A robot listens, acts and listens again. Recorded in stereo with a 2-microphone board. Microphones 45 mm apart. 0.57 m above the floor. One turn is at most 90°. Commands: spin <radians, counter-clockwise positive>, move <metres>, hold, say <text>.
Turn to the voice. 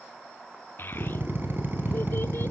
spin 0.87
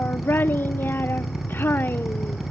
spin 1.13
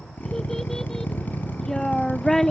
spin 0.26
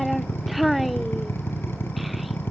say Facing the child speaking.